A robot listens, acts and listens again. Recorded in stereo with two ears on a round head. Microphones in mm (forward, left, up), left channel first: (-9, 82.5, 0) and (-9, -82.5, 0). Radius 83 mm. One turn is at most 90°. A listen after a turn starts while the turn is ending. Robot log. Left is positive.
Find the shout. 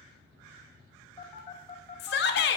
note: The shout: about 60° left or 120° left.
cmd yaw +60
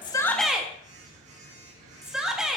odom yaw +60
end: Found it: a shout, straight ahead.